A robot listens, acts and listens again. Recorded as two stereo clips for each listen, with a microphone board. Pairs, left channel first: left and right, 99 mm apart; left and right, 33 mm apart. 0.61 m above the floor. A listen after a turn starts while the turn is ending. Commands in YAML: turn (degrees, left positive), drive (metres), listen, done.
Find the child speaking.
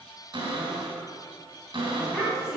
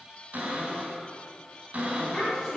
turn: 30
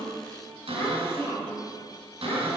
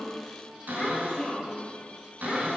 turn: 150
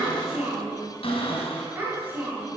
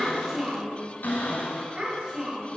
turn: -25
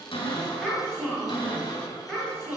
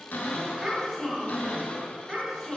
done: "Found it: a child speaking, straight ahead, 2 to 4 m away."